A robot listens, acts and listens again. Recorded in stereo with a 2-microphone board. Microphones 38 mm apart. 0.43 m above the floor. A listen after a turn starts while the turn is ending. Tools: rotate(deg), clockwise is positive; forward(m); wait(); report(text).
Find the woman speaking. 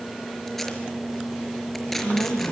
rotate(-70)
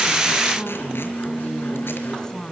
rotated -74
rotate(-20)
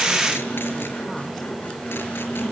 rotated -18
wait()
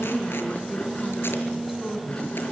report("Found it: a woman speaking, straight ahead.")